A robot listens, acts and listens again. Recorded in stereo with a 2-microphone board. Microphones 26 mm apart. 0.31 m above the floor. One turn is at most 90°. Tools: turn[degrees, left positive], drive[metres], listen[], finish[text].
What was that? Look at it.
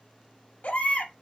Action: turn[90]
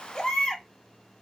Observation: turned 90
Thought: So it is at 15° left.
Action: turn[15]
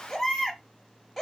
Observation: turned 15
Action: finish[Found it: a baby crying, straight ahead.]